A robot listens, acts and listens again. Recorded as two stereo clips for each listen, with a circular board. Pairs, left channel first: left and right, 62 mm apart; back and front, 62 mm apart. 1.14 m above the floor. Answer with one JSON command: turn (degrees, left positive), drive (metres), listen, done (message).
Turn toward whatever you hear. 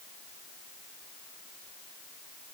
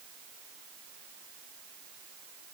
{"listen": true}
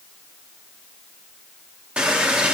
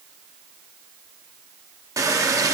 {"turn": -20}
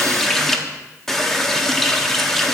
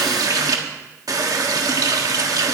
{"done": "Found it: a running tap, straight ahead."}